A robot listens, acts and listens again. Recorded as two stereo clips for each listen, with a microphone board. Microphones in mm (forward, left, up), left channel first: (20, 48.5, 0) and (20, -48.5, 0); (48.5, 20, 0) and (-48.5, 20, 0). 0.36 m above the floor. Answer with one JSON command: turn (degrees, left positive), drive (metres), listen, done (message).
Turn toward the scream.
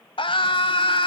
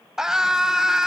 {"turn": 95}
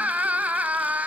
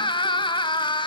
{"turn": -15}
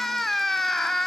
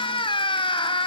{"done": "Found it: a scream, straight ahead, 2 to 4 m away."}